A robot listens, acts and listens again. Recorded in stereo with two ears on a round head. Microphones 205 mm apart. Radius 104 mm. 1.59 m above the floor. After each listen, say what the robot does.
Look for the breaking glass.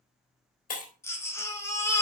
Turn 35° left.
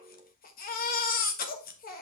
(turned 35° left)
Keep listening.
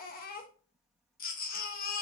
I heard breaking glass, but can't make it out now. It was about straight ahead or 110° left.